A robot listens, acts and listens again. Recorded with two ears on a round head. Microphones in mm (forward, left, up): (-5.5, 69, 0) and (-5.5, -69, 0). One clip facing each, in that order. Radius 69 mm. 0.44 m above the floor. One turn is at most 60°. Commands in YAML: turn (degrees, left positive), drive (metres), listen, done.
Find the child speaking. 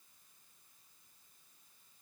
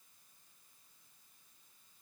listen: true
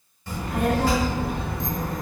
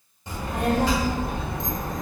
turn: -20
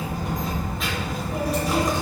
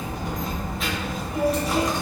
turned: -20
done: "Facing the child speaking, under 1 m away."